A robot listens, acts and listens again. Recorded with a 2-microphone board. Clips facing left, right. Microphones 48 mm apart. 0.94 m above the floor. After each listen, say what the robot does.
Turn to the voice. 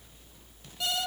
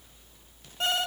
Keep listening.
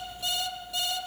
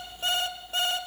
Keep listening.
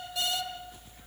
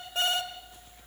I can't make out anyone speaking to turn to.